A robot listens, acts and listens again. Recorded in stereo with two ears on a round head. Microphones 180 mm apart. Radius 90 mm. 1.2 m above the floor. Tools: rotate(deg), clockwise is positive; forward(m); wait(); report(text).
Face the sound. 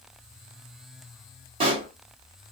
rotate(30)
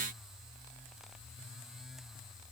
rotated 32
wait()
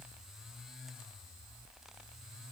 report("I heard a pop, but can't make it out now. It was about 5° left or 120° right.")